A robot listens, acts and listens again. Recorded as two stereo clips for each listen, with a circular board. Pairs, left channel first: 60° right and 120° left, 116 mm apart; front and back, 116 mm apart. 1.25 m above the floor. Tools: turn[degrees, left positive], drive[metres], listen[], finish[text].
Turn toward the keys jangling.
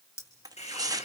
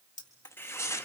Action: finish[Facing the keys jangling.]